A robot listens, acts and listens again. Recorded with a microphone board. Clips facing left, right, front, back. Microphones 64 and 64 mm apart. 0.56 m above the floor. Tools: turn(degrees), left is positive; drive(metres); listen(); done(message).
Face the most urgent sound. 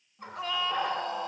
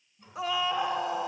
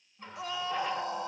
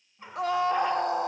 turn(degrees=-175)
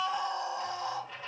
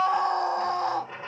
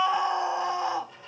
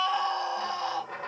turn(degrees=-70)
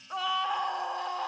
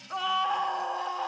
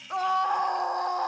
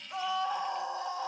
done("Found it: a scream, straight ahead.")